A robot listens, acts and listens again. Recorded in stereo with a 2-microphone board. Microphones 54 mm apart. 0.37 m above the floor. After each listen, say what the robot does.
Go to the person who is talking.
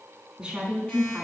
Turn 15° right.
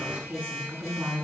Turn 150° right.
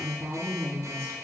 Turn 55° right.
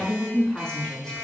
Turn 15° left.
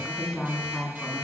Turn 10° left.
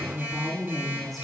Drive 1.0 m forward.
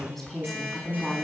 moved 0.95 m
Drive 1.0 m forward.
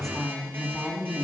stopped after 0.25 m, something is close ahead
Something is in my way. I am facing the woman speaking but have not reached it.